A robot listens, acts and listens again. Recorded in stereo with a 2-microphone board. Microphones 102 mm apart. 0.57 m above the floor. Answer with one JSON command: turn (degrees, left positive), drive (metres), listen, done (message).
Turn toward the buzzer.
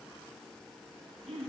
{"listen": true}
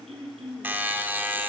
{"turn": -20}
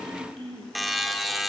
{"done": "Facing the buzzer, under 1 m away."}